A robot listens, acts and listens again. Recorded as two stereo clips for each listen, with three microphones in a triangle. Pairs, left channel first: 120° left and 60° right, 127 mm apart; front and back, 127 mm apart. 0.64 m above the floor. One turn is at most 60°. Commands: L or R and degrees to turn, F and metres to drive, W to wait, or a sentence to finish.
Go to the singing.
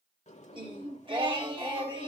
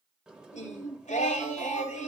R10
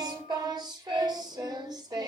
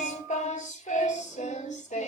F1.0
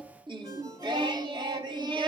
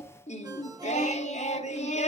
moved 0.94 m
R10
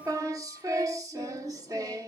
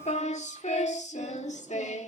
F1.0
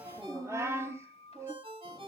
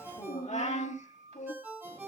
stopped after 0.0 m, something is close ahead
L10
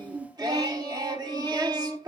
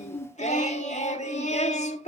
Arrived at the singing, straight ahead.